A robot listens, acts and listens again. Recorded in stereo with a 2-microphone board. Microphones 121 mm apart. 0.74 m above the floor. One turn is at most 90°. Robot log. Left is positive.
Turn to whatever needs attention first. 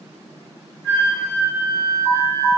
cmd yaw -30
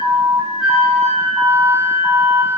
note: So it is at 145° right.
cmd yaw -90
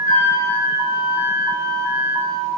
note: The alarm is now 45° right.
cmd yaw -45
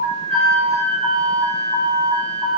note: The alarm is now 25° right.
cmd yaw -25
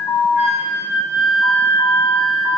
end: Facing the alarm, 1 to 2 m away.